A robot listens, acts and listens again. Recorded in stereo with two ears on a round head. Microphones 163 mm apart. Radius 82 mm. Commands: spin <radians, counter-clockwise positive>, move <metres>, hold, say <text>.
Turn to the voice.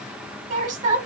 spin -0.79
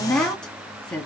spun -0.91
say Facing the woman speaking.